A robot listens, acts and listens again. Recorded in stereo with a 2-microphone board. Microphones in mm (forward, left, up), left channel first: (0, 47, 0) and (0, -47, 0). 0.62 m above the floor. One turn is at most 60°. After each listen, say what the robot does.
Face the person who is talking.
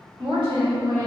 Turn 50° right.
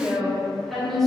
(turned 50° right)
Facing the woman speaking, 1 to 2 m away.